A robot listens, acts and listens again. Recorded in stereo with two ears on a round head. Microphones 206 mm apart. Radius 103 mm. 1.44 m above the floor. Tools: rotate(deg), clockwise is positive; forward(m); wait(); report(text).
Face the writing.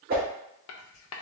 rotate(-70)
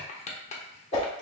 rotate(-30)
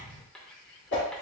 wait()
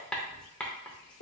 report("Facing the writing.")